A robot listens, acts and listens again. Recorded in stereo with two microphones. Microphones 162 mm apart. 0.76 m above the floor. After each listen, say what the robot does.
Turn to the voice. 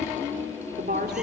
Turn 65° right.
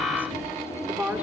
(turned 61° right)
Turn 10° right.
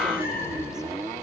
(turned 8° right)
Keep listening.
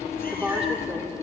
Facing the woman speaking.